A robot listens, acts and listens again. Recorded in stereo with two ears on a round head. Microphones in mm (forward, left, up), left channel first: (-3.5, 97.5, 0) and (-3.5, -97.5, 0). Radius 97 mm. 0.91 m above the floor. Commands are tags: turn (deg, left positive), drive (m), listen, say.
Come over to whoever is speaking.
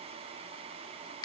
<listen/>
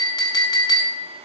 <listen/>
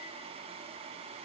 <say>I can't make out anyone speaking, only a clink.</say>